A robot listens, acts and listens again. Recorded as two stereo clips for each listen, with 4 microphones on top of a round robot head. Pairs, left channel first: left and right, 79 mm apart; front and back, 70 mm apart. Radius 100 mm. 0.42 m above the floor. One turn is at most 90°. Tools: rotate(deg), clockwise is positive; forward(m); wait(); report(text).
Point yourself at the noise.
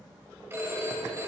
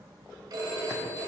rotate(90)
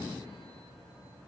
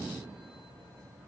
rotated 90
rotate(60)
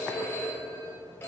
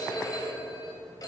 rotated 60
rotate(-30)
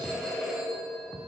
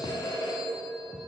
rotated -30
report("Facing the phone ringing, 2 to 4 m away.")